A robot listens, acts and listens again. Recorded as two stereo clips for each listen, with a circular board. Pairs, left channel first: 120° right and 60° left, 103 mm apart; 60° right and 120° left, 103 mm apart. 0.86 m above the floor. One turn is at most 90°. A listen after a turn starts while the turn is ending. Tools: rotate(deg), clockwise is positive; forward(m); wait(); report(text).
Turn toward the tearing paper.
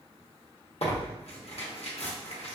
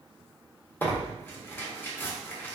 rotate(90)
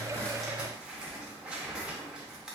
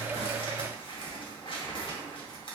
rotate(20)
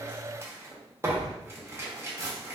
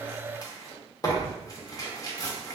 report("Found it: tearing paper, straight ahead, under 1 m away.")